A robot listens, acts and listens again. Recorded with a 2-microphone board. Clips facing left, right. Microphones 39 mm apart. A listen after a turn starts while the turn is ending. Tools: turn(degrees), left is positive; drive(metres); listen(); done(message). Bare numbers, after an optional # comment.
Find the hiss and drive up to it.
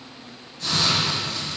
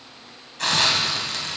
turn(-90)
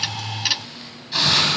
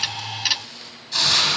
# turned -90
# So it is at 10° left.
turn(10)
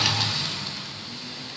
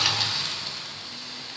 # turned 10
drive(1.0)
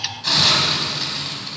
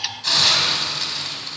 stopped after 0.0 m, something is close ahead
done("Blocked. The hiss is further on, straight ahead.")